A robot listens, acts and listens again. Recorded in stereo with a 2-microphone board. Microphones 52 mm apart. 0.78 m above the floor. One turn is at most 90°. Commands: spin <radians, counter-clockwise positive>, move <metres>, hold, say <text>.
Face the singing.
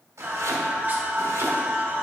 spin -0.61
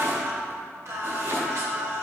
spin -1.57
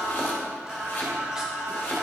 spin -0.17
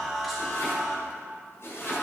say Facing the singing.